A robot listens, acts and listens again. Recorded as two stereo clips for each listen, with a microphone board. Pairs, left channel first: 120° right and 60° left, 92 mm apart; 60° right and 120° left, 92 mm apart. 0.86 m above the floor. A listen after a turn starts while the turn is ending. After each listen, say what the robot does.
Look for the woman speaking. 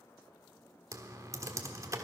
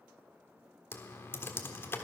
Keep listening.
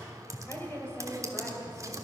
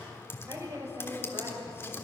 Turn 170° left.
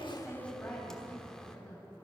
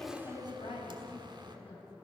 Turn 45° right.
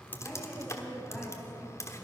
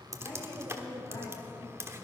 Turn 25° right.
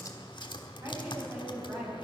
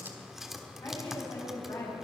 Facing the woman speaking.